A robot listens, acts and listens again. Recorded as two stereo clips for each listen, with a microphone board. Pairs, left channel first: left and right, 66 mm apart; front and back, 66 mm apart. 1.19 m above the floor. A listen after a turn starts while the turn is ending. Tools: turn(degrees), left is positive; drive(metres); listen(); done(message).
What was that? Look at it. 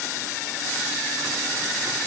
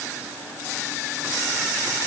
listen()
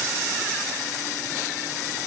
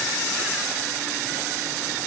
listen()
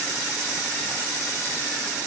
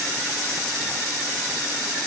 done("I can't make out anything to turn to.")